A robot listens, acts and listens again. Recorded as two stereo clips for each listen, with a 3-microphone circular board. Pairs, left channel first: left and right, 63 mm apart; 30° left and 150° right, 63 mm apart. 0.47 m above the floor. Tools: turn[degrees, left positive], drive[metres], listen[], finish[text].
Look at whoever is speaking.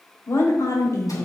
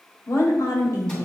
Thought: The woman speaking: 60° left.
Action: turn[60]
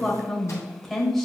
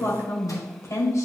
Action: finish[Facing the woman speaking, 1 to 2 m away.]